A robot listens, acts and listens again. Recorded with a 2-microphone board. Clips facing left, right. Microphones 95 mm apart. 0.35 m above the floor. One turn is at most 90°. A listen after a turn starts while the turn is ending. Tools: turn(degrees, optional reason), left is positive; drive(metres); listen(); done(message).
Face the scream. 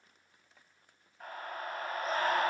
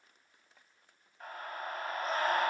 turn(degrees=30)
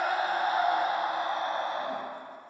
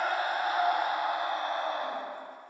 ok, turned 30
turn(degrees=90, reason="So it is at 145° left.")
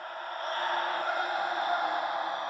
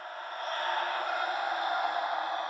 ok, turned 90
turn(degrees=40, reason="The scream is now 40° left.")
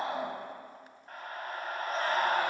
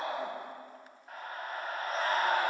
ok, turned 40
done("Found it: a scream, straight ahead, 1 to 2 m away.")